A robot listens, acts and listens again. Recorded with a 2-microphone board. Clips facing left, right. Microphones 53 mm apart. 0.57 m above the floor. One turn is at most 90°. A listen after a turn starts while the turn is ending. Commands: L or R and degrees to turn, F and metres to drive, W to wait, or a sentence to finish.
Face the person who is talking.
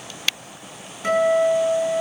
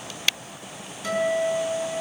W
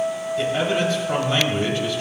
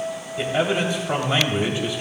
R15
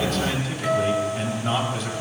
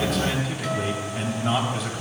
Facing the man speaking, 2 to 4 m away.